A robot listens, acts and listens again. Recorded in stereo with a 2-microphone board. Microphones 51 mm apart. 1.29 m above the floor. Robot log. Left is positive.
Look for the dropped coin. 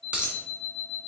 note: The dropped coin: about 25° right or 155° right.
cmd yaw -25
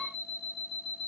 cmd idle
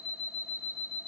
end: I heard a dropped coin, but can't make it out now. It was about straight ahead or 130° right.